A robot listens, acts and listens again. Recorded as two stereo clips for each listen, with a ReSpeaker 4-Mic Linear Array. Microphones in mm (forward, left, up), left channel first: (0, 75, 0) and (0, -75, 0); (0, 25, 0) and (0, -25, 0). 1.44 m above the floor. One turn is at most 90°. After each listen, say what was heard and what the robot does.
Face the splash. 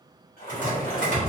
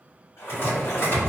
The splash: about 70° left or 110° left. Turn 70° left.
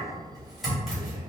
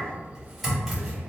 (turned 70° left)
Keep listening.
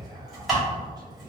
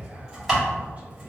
I heard a splash, but can't make it out now. It was about straight ahead or 40° left.